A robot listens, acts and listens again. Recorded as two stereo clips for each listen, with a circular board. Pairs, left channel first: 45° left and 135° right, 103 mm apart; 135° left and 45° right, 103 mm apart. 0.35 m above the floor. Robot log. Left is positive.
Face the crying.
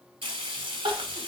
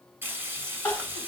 note: The crying: 155° right.
cmd yaw -155
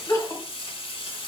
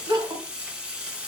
note: The crying is now 10° right.
cmd yaw -10
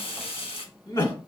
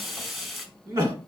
end: Facing the crying.